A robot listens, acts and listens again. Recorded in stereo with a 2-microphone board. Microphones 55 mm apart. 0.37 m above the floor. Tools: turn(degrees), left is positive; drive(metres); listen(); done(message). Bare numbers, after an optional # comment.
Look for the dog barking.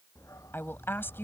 turn(90)
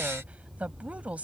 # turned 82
done("Facing the dog barking.")